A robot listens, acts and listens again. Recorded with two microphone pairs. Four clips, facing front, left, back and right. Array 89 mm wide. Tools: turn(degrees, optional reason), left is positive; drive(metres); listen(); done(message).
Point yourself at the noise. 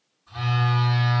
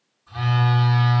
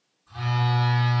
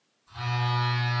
turn(degrees=80, reason="The phone buzzing: 80° left.")
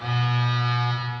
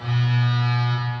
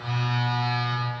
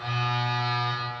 turn(degrees=-15, reason="The phone buzzing is now 15° right.")
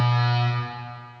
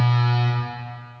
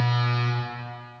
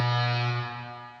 done("Facing the phone buzzing.")